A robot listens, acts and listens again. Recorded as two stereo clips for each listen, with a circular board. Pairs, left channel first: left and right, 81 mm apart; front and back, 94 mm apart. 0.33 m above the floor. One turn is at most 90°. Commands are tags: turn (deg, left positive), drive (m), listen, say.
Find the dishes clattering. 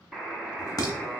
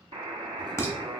<turn deg="60"/>
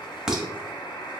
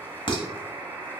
<turn deg="-10"/>
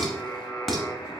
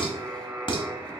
<say>Found it: dishes clattering, straight ahead.</say>